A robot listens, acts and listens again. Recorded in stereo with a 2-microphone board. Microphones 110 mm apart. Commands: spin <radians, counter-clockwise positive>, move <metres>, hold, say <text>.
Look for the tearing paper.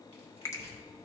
spin 1.57
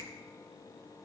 hold
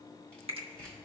spin 0.17
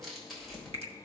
say Found it: tearing paper, straight ahead, 2 to 4 m away.